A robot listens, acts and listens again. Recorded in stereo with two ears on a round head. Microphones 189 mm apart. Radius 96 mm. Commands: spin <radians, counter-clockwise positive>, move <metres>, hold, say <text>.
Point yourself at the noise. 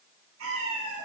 spin -1.05
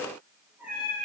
say Found it: a cat meowing, straight ahead, over 4 m away.